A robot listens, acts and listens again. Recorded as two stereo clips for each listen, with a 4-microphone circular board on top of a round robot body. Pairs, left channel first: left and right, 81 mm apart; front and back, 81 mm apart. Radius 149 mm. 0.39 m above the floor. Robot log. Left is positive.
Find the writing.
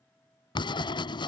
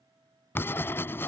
note: The writing: 65° left.
cmd yaw +65
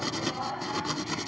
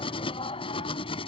end: Facing the writing.